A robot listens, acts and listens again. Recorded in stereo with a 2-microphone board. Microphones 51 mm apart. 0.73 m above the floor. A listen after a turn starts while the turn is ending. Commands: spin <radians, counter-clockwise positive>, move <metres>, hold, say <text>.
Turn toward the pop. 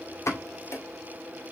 spin 1.22
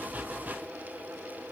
hold
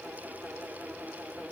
say I heard a pop, but can't make it out now. It was about straight ahead or 40° left.